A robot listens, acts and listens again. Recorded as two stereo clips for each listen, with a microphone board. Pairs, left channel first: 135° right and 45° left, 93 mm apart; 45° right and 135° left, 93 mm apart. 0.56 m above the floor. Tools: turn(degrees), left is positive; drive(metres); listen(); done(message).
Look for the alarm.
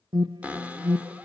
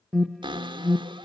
turn(degrees=45)
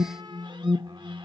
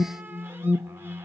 done("Found it: an alarm, straight ahead, under 1 m away.")